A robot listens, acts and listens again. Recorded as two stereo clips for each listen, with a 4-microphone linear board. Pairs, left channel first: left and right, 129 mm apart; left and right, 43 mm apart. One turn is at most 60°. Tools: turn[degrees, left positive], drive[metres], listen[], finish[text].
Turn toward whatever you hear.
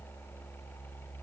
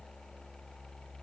Action: listen[]
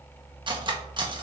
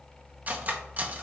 Thought: The cutlery clinking: about 40° right or 140° right.
Action: turn[-40]
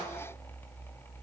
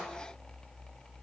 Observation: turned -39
Action: listen[]
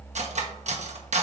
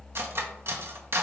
Thought: So it is at 100° right.
Action: turn[-60]
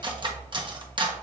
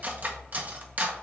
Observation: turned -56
Thought: The cutlery clinking is now 40° right.
Action: turn[-40]
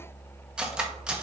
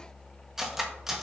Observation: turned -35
Thought: The cutlery clinking is now 10° right.
Action: turn[-10]
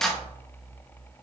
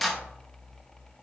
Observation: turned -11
Action: finish[Facing the cutlery clinking.]